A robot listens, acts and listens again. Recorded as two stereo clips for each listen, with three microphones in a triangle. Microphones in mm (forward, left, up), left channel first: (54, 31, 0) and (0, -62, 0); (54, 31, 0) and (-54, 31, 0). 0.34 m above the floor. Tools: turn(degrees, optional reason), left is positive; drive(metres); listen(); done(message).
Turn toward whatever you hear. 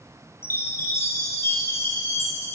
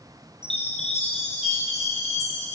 turn(degrees=-10, reason="The chime: 10° right.")
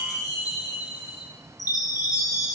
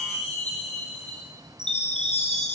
done("Found it: a chime, straight ahead, 2 to 4 m away.")